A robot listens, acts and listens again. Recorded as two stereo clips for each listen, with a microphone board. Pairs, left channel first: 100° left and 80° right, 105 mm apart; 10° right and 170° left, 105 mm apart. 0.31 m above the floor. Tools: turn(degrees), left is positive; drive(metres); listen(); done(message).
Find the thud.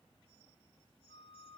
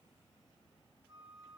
listen()
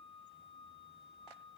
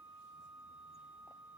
listen()
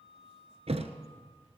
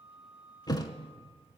turn(degrees=-65)
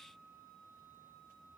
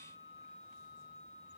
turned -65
done("I heard a thud from this way, but can't make it out now.")